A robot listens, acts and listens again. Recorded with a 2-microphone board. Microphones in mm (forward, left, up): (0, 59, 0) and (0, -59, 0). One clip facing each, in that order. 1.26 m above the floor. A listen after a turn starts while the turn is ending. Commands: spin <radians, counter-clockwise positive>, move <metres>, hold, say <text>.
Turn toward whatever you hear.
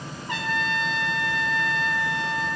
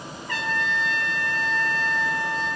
spin 0.35
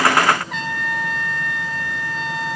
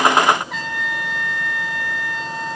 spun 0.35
say Found it: a trumpet, straight ahead, under 1 m away.